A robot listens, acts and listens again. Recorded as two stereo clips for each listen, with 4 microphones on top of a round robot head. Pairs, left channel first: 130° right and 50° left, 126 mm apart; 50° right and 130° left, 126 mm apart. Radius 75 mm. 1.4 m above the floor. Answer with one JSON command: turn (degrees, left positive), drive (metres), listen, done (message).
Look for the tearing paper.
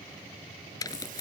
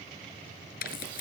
{"turn": -65}
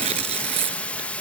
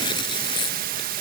{"done": "Found it: tearing paper, straight ahead."}